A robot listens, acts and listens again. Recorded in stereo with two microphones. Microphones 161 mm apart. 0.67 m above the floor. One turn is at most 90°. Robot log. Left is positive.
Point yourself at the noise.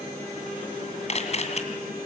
note: The camera shutter: about 45° left or 135° left.
cmd yaw +45
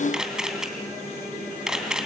end: Facing the camera shutter, 2 to 4 m away.